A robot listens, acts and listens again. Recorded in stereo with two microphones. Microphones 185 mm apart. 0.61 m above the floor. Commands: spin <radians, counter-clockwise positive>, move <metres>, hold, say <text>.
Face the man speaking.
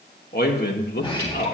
spin 1.05
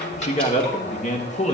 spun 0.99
spin 0.79
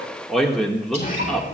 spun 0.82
say Found it: a man speaking, straight ahead, 1 to 2 m away.